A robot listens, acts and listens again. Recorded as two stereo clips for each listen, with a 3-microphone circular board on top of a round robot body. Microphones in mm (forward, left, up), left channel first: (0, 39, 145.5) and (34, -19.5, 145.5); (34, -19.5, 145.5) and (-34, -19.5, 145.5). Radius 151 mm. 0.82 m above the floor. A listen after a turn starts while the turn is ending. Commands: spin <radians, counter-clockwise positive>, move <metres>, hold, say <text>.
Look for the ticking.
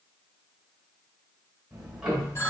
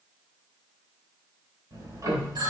spin -2.44
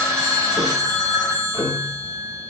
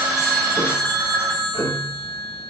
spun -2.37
say Facing the ticking, 2 to 4 m away.